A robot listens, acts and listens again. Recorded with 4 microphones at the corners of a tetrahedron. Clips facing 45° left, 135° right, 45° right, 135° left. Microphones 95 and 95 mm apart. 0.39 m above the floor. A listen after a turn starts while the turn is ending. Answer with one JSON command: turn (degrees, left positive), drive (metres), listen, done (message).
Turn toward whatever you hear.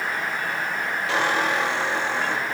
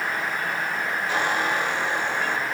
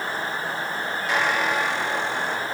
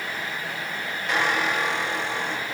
{"turn": 45}
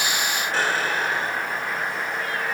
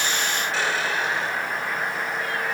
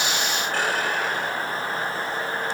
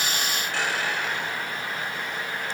{"done": "Found it: a squeak, straight ahead."}